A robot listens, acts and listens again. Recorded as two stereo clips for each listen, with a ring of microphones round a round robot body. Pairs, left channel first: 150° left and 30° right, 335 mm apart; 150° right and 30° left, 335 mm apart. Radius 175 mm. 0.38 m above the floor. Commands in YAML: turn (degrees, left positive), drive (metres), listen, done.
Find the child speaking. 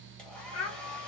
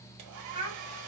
turn: 105
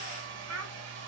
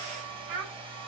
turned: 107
turn: 15
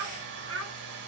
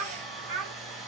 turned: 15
turn: 15
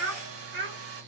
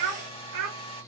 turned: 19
turn: 20
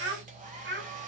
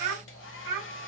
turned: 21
turn: 25
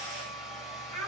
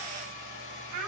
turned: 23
turn: 10
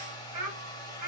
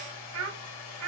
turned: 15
done: "Found it: a child speaking, straight ahead, 1 to 2 m away."